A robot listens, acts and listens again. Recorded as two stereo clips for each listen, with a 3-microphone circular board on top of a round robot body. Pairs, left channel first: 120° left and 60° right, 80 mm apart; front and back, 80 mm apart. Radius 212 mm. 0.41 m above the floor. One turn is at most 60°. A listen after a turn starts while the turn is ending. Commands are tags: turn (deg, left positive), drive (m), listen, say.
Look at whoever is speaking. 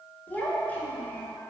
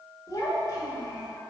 <turn deg="50"/>
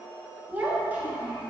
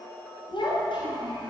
<turn deg="10"/>
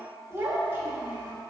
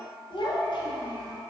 <say>Facing the child speaking, 1 to 2 m away.</say>